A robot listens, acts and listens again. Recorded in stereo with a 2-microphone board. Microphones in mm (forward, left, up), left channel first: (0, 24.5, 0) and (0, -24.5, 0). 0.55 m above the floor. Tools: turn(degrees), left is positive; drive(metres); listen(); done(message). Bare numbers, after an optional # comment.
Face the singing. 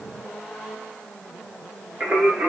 # The singing: about 40° right or 140° right.
turn(-40)
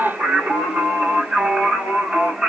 # So it is at 25° right.
turn(-25)
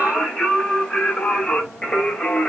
# The singing is now 15° left.
turn(15)
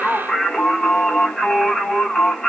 done("Found it: singing, straight ahead, 1 to 2 m away.")